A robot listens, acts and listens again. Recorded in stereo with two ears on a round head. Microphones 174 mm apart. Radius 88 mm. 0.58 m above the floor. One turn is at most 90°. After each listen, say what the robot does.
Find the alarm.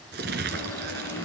Turn 30° left.
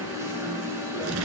Turn 15° right.
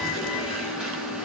Found it: an alarm, straight ahead, over 4 m away.